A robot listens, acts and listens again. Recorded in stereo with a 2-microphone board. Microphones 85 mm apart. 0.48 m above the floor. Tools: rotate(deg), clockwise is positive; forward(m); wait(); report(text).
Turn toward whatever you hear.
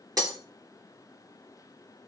rotate(45)
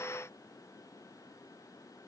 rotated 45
wait()
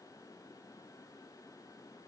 report("I heard breaking glass, but can't make it out now. It was about straight ahead or 90° right.")